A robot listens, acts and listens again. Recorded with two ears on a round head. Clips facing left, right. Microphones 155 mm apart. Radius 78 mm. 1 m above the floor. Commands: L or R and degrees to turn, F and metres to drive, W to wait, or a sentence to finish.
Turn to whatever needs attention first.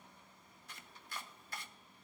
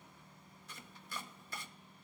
W
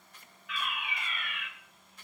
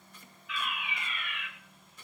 L50
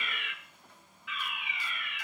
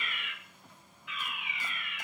L75
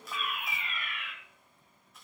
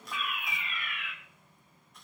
L30
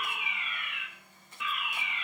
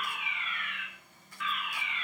L10
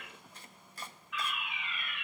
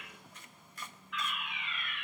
Facing the fire alarm.